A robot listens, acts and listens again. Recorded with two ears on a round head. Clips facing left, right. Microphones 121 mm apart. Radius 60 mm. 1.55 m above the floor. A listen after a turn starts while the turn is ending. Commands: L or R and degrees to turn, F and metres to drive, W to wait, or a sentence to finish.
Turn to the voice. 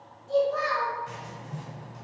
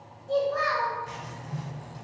L70
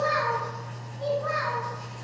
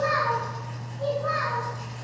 L25
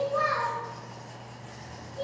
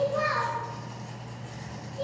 R10
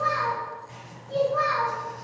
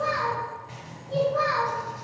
Found it: a child speaking, straight ahead, 2 to 4 m away.